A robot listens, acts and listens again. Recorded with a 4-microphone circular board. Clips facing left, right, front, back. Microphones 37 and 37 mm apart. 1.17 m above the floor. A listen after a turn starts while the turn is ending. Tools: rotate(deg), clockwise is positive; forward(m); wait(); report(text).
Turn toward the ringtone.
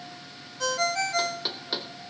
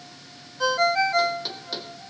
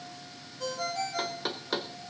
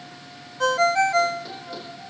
rotate(160)
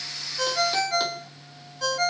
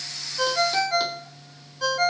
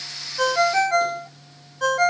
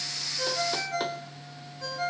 rotate(10)
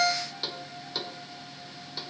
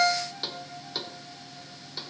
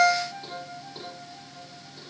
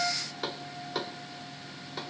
report("Facing the ringtone, under 1 m away.")